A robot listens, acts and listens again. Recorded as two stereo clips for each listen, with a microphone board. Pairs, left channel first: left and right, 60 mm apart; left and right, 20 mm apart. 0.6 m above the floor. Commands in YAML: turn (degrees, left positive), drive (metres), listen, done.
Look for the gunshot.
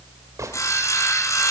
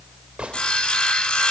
turn: -65
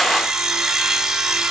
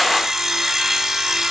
listen: true
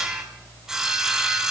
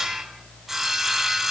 done: "I heard a gunshot, but can't make it out now. It was about straight ahead or 50° right."